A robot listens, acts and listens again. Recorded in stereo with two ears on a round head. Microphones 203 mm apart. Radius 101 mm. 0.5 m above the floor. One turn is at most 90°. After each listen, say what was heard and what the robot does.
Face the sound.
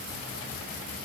Keep listening.
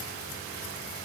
Keep listening.
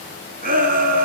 The shout: about 40° right or 140° right. Turn 40° right.
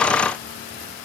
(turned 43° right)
Keep listening.
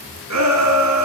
So it is at 95° right. Turn 90° right.
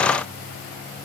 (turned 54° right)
Nothing new. It was at 45° right. Turn 45° right.
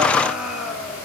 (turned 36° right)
Found it: a shout, straight ahead.